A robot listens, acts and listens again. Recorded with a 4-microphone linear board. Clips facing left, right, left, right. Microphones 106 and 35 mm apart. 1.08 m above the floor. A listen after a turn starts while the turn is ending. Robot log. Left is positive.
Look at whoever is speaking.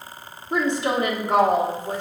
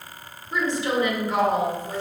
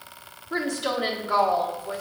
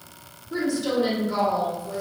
note: The woman speaking: about 60° left or 120° left.
cmd yaw +60
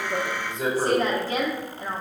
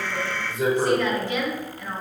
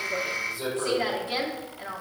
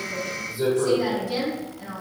note: So it is at 40° left.
cmd yaw +40
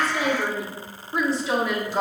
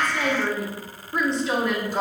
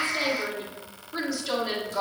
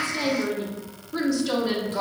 end: Found it: a woman speaking, straight ahead, 1 to 2 m away.